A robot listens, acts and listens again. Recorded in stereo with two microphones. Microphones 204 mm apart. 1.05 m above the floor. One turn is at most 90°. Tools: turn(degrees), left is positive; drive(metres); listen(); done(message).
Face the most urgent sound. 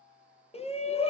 turn(degrees=30)
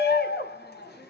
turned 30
turn(degrees=90)
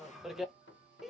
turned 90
done("Found it: a shout, straight ahead, under 1 m away.")